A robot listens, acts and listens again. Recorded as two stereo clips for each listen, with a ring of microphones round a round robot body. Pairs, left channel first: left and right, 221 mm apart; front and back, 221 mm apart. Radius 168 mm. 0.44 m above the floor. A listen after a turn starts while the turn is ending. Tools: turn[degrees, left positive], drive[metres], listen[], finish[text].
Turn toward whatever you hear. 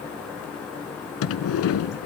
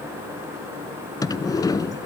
Thought: The sliding door: 75° left.
Action: turn[75]
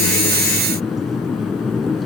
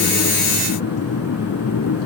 Action: finish[Found it: a sliding door, straight ahead, under 1 m away.]